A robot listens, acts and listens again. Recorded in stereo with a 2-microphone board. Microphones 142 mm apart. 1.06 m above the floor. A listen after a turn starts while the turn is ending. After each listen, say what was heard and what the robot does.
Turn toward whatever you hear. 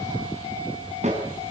The snare drum: about 50° right or 130° right. Turn 50° right.
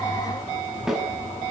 Facing the snare drum, over 4 m away.